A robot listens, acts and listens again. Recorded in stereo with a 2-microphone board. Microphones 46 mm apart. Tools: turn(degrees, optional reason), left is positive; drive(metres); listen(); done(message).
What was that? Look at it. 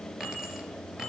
turn(degrees=-30)
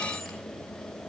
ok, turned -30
listen()
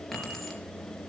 done("Facing the keys jangling.")